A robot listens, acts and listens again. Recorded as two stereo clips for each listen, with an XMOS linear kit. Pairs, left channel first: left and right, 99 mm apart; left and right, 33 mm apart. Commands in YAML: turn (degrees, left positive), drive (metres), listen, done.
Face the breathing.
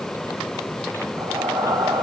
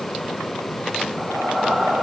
turn: -35
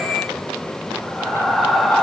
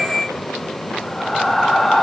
done: "Facing the breathing."